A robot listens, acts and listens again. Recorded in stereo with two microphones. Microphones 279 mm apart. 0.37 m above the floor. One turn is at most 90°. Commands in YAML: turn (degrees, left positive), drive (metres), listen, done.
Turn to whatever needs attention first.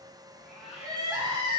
turn: -15
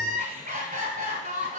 turn: -90
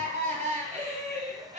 turn: -30
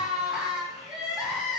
done: "Facing the crying, 2 to 4 m away."